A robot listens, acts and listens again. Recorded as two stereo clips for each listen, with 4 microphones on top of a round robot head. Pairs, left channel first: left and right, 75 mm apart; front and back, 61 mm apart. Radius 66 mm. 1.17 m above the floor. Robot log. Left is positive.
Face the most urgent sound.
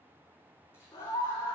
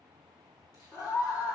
note: The scream: 30° left.
cmd yaw +30
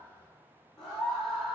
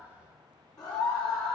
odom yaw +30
end: Facing the scream, over 4 m away.